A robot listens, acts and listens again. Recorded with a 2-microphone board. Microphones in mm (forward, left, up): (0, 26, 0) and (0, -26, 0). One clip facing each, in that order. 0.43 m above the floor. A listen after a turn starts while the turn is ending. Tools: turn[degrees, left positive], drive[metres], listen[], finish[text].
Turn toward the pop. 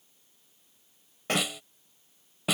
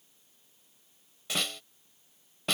Thought: The pop: about 50° left or 130° left.
Action: turn[50]
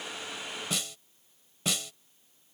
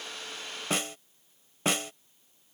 Action: listen[]
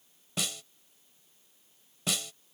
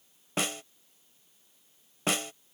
Action: finish[I heard a pop, but can't make it out now. It was about straight ahead or 80° left.]